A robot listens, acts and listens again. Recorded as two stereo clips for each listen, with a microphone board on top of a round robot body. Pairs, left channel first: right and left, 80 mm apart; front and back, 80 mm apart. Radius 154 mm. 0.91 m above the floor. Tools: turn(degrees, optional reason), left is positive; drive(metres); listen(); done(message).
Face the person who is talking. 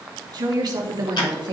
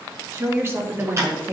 turn(degrees=115, reason="The woman speaking: 115° left.")
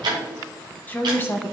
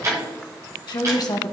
turn(degrees=-35, reason="The woman speaking is now 35° right.")
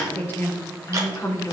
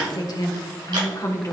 turn(degrees=-45, reason="The woman speaking is now 45° right.")
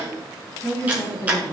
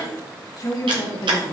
turn(degrees=-45, reason="The woman speaking is now 45° right.")
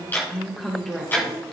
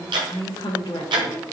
done("Facing the woman speaking.")